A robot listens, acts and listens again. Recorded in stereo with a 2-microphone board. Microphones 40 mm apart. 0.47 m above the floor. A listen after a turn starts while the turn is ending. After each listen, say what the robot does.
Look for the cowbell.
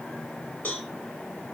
Turn 50° left.
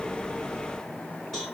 Turn 15° left.
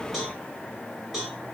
Found it: a cowbell, straight ahead.